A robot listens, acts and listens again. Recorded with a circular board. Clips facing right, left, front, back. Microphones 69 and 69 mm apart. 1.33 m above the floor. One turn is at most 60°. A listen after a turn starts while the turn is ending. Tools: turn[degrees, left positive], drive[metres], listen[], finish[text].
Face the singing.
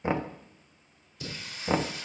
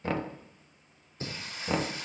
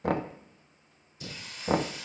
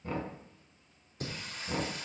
Thought: The singing: 140° left.
Action: turn[60]
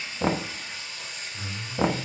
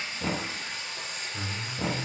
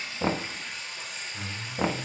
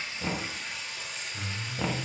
Thought: The singing is now 85° left.
Action: turn[60]
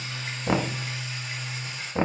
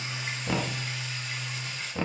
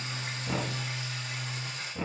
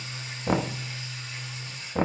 Thought: The singing is now 10° right.
Action: turn[-10]
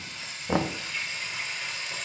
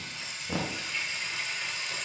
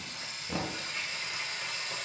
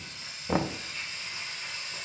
Action: finish[Found it: singing, straight ahead, over 4 m away.]